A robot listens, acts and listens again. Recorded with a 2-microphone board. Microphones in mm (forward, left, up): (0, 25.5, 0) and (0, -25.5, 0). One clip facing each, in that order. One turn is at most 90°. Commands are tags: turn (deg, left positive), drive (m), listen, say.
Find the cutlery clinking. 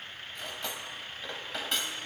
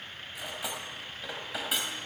<turn deg="-30"/>
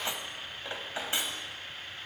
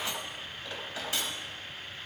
<turn deg="25"/>
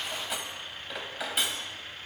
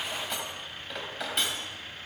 <say>Facing the cutlery clinking, 2 to 4 m away.</say>